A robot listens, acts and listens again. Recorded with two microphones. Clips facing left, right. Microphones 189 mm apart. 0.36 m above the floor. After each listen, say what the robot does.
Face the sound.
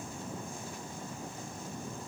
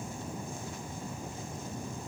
Keep listening.
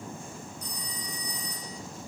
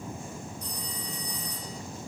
Turn 55° right.
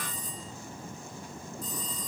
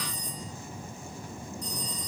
Found it: a phone ringing, straight ahead, over 4 m away.